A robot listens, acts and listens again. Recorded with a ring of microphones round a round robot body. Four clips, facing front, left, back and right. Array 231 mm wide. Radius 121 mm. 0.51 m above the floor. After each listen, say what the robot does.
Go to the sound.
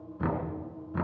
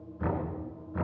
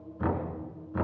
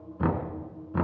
Turn 85° right.
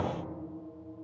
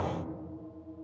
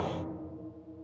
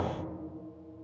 Drive 1.0 m forward.
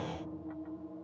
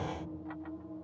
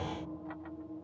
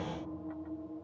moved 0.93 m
Keep listening.
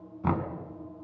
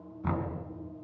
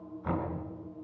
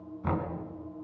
Drive 1.0 m forward.
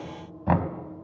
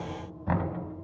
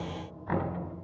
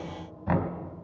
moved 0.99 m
Drive 1.0 m forward.
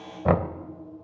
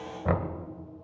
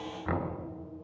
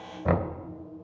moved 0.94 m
Drive 1.0 m forward.
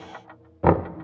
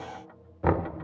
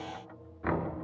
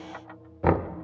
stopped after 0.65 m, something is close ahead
Turn 10° right.
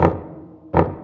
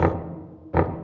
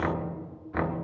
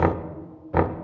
I am next to the knocking.